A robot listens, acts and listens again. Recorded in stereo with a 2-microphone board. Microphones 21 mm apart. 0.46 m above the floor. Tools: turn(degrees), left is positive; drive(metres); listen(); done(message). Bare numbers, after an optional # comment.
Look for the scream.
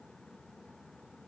listen()
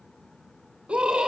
# The scream: about 45° right or 135° right.
turn(-45)
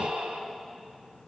# So it is at 90° right.
turn(-90)
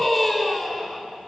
done("Facing the scream, over 4 m away.")